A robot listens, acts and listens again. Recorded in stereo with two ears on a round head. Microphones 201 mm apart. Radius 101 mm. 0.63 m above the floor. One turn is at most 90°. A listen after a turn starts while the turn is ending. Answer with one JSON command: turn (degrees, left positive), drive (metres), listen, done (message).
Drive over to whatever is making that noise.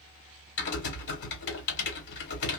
{"turn": 55}
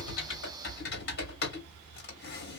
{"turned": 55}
{"turn": 55}
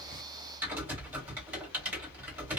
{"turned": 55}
{"turn": -10}
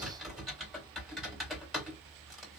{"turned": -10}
{"drive": 1.0}
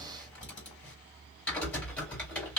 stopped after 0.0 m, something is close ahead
{"done": "Something is in my way. I am facing the typing on a keyboard but have not reached it."}